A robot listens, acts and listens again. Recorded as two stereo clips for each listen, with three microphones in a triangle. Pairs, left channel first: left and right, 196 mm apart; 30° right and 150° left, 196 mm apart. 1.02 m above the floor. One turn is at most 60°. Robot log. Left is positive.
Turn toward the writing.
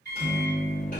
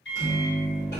cmd idle
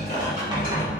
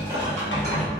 note: The writing: 20° right.
cmd yaw -20
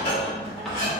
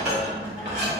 cmd idle
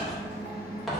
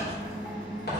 end: Found it: writing, straight ahead, under 1 m away.